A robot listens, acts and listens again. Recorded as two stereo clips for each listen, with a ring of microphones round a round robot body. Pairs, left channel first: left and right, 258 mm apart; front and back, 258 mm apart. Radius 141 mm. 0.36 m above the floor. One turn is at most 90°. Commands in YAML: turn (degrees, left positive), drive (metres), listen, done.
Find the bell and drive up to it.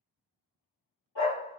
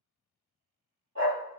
listen: true
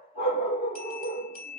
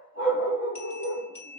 turn: 85
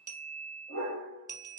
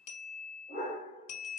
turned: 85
turn: -15
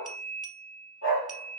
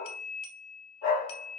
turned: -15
drive: 1.0
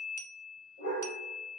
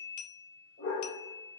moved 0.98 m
turn: 10
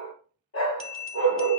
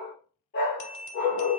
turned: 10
drive: 1.0
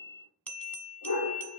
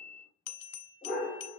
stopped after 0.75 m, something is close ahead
done: "I am next to the bell."